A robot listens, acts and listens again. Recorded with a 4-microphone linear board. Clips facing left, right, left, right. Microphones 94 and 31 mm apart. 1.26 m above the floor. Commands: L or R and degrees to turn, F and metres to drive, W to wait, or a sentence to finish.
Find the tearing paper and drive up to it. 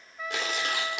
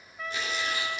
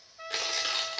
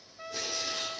L90
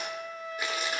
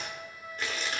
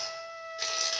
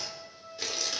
L10
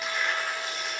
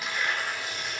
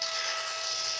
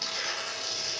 F1.0
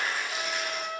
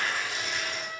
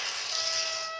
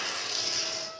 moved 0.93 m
F1.0
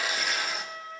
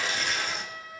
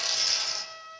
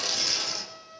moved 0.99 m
F1.0
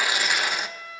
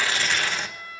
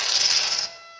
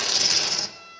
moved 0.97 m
L15
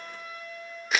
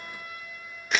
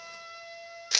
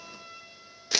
F1.0
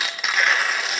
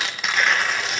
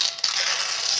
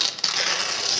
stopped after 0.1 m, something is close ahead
Arrived at the tearing paper, straight ahead.